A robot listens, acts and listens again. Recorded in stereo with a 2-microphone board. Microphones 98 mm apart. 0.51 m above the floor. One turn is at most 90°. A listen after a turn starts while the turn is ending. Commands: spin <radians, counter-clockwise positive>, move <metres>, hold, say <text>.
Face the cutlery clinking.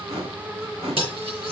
spin -1.13
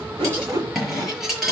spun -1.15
say Found it: cutlery clinking, straight ahead.